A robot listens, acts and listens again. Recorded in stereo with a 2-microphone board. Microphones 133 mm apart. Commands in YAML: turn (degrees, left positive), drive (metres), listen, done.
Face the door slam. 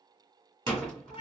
turn: 30
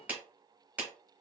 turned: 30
listen: true
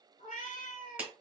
done: "I heard a door slam, but can't make it out now. It was about 30° right or 150° left."